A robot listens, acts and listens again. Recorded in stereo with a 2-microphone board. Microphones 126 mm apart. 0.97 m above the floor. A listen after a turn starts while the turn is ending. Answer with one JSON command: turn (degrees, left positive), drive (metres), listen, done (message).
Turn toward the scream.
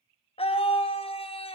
{"turn": 50}
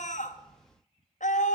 {"turn": 80}
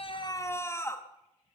{"turn": 20}
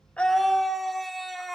{"done": "Facing the scream."}